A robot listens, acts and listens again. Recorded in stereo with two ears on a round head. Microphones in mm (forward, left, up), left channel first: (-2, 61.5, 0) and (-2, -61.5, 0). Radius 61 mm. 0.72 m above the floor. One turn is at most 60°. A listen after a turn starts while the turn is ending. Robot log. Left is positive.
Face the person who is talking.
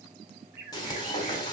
cmd idle
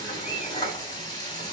cmd idle
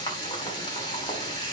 end: I can't make out anyone speaking, only a bird and frying.